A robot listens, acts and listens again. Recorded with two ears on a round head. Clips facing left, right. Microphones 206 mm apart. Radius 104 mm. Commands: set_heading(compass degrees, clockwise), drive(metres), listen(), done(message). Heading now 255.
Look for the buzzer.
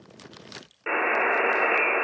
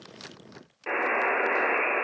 set_heading(225)
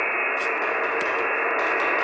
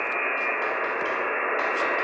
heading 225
set_heading(85)
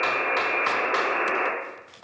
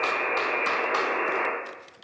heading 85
set_heading(60)
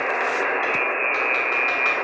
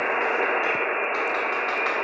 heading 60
set_heading(70)
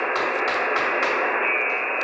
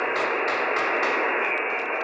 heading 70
done("Found it: a buzzer, straight ahead, 1 to 2 m away.")